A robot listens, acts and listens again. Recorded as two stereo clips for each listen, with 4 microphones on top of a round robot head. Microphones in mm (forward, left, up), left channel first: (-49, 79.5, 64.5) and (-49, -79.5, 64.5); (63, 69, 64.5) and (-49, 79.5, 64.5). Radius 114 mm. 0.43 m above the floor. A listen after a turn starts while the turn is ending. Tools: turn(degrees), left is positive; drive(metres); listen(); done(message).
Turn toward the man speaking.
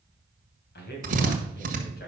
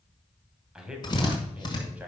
turn(degrees=100)
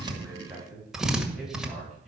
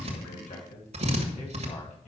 done("Found it: a man speaking, straight ahead, 2 to 4 m away.")